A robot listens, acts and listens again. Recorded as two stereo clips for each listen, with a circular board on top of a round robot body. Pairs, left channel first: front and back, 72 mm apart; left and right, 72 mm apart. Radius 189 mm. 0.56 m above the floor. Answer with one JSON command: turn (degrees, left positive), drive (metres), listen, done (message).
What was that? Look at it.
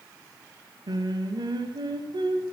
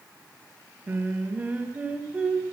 {"turn": -165}
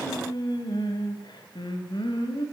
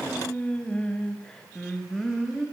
{"done": "Facing the singing, 2 to 4 m away."}